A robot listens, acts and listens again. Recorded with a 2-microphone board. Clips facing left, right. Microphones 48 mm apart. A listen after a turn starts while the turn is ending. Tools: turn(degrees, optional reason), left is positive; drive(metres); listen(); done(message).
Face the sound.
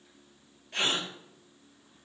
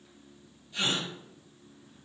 turn(degrees=90)
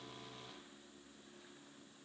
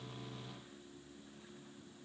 done("Facing where the gasp came from. I can't hear it now.")